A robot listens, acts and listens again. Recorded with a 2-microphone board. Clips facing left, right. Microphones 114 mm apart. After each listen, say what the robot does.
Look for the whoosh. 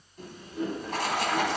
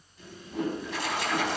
Turn 75° right.
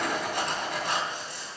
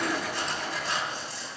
Keep listening.
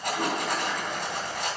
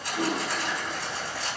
Found it: a whoosh, straight ahead.